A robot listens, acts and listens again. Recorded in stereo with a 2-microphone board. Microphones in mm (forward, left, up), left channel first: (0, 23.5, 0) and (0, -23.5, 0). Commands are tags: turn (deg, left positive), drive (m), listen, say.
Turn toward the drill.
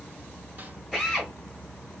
<turn deg="30"/>
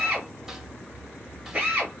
<turn deg="-30"/>
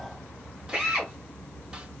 <turn deg="-15"/>
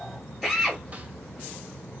<say>Facing the drill, 2 to 4 m away.</say>